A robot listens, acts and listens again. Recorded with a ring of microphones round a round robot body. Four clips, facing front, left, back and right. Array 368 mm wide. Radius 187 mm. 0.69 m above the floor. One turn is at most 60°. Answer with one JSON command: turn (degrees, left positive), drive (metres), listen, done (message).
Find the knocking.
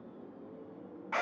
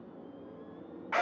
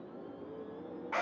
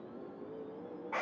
{"listen": true}
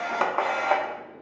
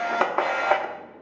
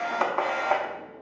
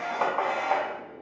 {"listen": true}
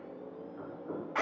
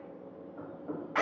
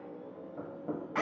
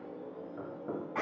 {"turn": -60}
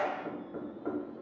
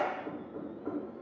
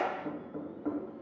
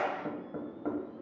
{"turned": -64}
{"turn": -60}
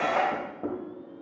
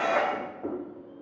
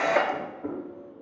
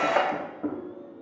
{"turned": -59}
{"turn": -25}
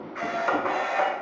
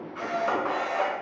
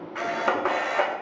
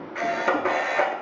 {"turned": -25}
{"listen": true}
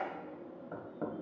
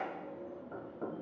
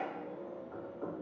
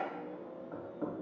{"done": "Facing the knocking, 2 to 4 m away."}